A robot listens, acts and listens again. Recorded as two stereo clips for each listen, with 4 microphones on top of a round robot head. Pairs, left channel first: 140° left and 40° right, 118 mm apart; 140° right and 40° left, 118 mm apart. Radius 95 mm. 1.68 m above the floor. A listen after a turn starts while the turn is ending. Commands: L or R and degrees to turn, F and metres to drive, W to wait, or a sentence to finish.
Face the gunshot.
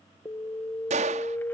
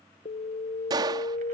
R15
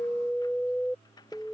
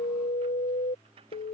Facing where the gunshot came from. I can't hear it now.